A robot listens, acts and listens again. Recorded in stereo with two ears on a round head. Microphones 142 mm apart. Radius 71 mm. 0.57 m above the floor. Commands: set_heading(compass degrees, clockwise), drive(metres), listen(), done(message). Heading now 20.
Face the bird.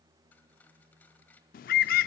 set_heading(320)
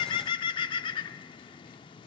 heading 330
set_heading(295)
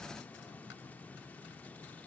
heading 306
set_heading(296)
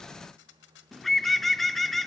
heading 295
done("Found it: a bird, straight ahead, under 1 m away.")